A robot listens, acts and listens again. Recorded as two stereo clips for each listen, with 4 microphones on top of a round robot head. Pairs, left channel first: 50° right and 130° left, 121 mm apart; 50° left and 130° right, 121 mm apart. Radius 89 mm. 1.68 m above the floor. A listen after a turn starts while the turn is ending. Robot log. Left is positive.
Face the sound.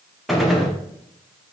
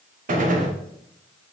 note: The gunshot: 140° right.
cmd yaw -140
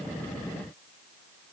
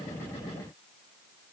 end: Facing where the gunshot came from. I can't hear it now.